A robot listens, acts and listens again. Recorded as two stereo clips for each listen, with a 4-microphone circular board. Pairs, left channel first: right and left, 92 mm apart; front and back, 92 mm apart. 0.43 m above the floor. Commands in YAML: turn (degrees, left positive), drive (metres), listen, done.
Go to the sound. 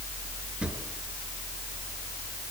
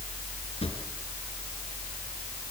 turn: 10
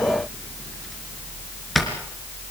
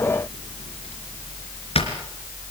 drive: 1.0
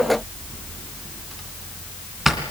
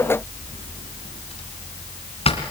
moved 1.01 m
drive: 1.0
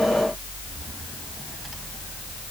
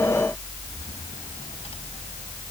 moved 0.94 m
listen: true
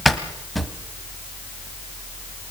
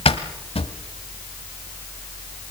drive: 1.0
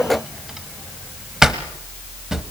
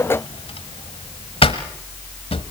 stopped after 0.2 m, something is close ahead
done: "Arrived at the drawer, straight ahead."